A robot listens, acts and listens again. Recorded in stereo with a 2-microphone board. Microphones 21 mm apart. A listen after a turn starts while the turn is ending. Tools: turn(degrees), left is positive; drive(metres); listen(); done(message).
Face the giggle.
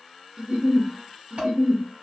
turn(degrees=-50)
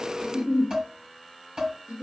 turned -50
turn(degrees=-80)
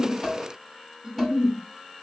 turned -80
turn(degrees=-30)
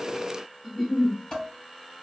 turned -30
done("Found it: a giggle, straight ahead, 1 to 2 m away.")